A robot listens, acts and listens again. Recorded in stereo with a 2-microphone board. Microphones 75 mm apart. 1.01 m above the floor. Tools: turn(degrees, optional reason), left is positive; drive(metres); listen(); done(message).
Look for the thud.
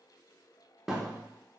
turn(degrees=-30)
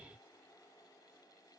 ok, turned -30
listen()
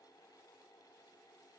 done("I heard a thud, but can't make it out now. It was about 25° left or 145° right.")